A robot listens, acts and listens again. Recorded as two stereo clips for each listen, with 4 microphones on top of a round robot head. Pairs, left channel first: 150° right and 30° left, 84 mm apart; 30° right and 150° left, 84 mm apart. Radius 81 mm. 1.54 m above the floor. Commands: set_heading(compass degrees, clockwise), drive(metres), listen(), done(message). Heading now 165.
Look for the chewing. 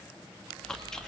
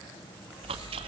set_heading(35)
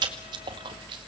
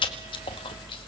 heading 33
done("Facing the chewing, 1 to 2 m away.")